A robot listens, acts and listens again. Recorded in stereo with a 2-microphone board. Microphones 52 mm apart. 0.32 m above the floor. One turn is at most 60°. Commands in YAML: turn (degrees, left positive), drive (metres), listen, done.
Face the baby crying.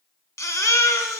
turn: 60
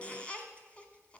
listen: true
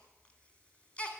turn: 20
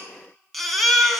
done: "Found it: a baby crying, straight ahead, 1 to 2 m away."